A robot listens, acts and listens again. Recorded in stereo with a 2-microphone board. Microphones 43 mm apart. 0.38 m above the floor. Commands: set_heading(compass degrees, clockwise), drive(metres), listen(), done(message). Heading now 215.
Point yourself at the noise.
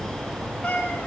set_heading(190)
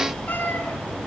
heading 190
set_heading(65)
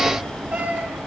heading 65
set_heading(90)
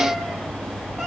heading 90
listen()
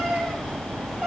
done("Found it: a cat meowing, straight ahead, over 4 m away.")